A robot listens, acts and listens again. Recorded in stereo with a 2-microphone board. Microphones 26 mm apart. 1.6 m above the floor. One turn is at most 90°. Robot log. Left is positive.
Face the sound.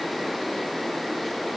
cmd idle
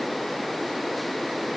cmd idle
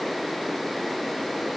end: I can't make out anything to turn to.